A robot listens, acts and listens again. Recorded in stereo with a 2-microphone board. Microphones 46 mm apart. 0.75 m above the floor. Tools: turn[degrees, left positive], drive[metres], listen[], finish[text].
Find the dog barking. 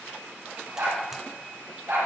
Action: turn[-90]
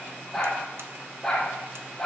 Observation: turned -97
Thought: So it is at 10° left.
Action: turn[10]
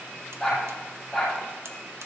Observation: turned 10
Action: finish[Facing the dog barking, over 4 m away.]